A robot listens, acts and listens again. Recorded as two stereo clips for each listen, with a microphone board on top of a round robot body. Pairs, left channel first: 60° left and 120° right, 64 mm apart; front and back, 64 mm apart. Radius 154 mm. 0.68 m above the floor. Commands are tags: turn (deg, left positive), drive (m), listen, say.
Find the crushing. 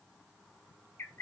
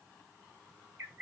<listen/>
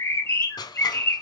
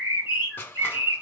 <turn deg="65"/>
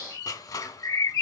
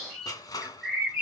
<turn deg="30"/>
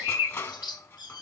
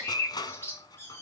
<turn deg="10"/>
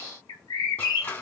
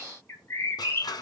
<say>Found it: crushing, straight ahead.</say>